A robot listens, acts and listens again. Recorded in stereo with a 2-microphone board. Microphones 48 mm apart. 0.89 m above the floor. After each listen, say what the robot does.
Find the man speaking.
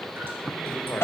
Turn 50° left.
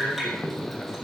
Found it: a man speaking, straight ahead.